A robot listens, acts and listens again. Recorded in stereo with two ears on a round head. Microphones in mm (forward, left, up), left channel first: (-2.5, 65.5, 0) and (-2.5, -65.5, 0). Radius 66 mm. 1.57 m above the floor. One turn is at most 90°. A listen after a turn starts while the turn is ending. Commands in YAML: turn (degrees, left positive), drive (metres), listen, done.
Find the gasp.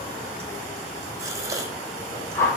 turn: -25
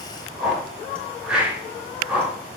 listen: true
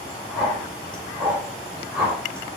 done: "I heard a gasp, but can't make it out now. It was about straight ahead or 130° right."